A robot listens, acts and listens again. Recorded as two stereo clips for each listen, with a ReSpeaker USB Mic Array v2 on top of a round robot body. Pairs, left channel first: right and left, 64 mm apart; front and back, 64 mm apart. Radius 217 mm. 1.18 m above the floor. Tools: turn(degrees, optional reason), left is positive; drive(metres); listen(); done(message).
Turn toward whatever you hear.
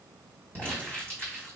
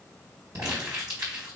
turn(degrees=-145, reason="The crumpling: 145° right.")
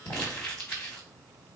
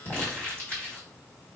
turn(degrees=-55, reason="The crumpling is now 55° right.")
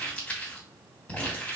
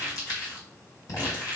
turn(degrees=-20, reason="The crumpling is now 20° right.")
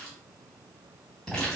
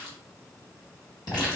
done("Found it: crumpling, straight ahead, 1 to 2 m away.")